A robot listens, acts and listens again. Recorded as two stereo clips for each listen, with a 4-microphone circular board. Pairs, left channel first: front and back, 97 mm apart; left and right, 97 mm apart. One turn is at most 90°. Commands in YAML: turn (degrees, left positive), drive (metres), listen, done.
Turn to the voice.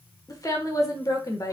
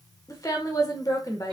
turn: 45
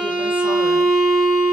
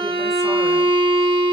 listen: true
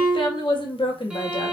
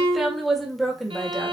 done: "Found it: a woman speaking, straight ahead, 1 to 2 m away."